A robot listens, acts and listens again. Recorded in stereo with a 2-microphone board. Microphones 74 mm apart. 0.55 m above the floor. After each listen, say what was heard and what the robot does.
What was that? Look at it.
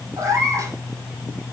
The cat meowing: about 50° right or 130° right. Turn 50° right.
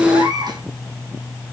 So it is at 80° right. Turn 80° right.
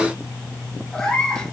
The cat meowing is now 10° left. Turn 10° left.
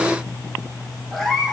Found it: a cat meowing, straight ahead, over 4 m away.